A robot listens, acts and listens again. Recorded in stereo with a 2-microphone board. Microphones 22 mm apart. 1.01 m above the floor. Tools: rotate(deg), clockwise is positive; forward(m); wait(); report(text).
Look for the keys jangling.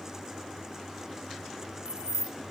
rotate(90)
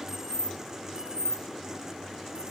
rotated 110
rotate(45)
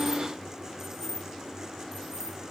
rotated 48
rotate(20)
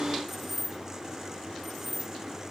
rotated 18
report("Found it: keys jangling, straight ahead, 2 to 4 m away.")